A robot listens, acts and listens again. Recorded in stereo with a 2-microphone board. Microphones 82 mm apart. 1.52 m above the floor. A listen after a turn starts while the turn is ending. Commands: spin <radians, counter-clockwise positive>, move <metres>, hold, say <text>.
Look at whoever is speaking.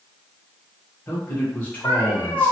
spin 0.35
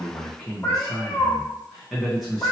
say Facing the man speaking.